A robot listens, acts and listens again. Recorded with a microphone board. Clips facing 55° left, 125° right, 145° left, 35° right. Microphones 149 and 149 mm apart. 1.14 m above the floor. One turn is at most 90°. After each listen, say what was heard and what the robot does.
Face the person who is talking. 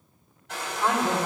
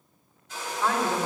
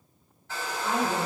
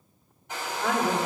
The woman speaking: 15° right. Turn 15° right.
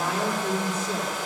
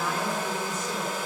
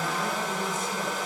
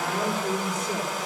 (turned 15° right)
Facing the woman speaking, 2 to 4 m away.